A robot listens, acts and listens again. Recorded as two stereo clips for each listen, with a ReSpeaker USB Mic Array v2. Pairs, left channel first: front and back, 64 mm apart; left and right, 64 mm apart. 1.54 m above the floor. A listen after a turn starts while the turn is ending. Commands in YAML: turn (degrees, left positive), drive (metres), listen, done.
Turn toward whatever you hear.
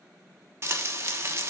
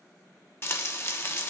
turn: 135
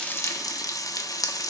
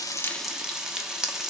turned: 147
turn: -10
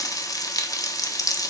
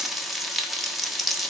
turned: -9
done: "Found it: frying, straight ahead, 1 to 2 m away."